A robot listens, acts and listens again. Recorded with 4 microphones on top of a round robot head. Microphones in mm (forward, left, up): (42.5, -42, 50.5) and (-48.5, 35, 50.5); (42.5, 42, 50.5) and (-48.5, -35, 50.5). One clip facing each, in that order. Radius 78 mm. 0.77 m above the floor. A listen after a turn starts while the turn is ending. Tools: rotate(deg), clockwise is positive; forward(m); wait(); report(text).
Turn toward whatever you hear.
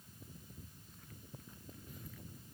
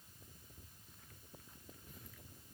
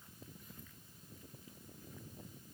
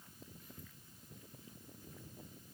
wait()
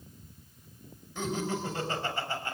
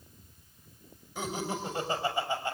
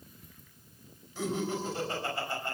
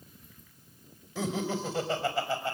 rotate(145)
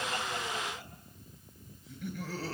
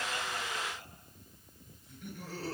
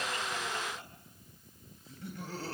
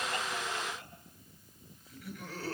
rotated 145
rotate(20)
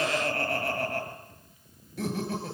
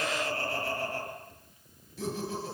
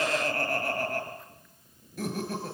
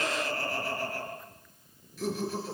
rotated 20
report("Found it: laughter, straight ahead, over 4 m away.")